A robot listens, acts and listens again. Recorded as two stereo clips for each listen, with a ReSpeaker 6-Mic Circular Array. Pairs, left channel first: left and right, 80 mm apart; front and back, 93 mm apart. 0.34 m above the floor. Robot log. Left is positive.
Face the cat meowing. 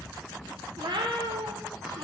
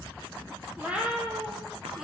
note: The cat meowing: 100° right.
cmd yaw -100
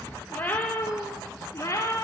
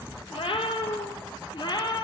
note: The cat meowing is now 40° left.
cmd yaw +40
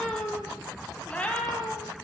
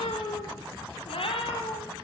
note: The cat meowing is now 15° left.
cmd yaw +15
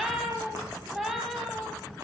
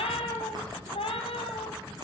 end: Found it: a cat meowing, straight ahead, 1 to 2 m away.